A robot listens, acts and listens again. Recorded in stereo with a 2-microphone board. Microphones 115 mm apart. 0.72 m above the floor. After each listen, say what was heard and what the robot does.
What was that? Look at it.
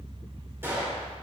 The gunshot: about 20° right or 160° right. Turn 20° right.
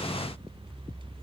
Keep listening.
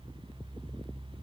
I heard a gunshot, but can't make it out now. It was about straight ahead or 140° right.